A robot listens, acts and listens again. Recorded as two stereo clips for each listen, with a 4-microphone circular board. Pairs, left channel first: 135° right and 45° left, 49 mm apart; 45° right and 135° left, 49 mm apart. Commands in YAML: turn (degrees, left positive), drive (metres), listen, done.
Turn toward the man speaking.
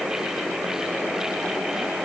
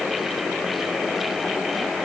listen: true
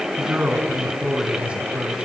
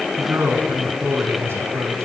turn: 110
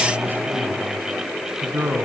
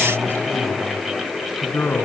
done: "Found it: a man speaking, straight ahead, 2 to 4 m away."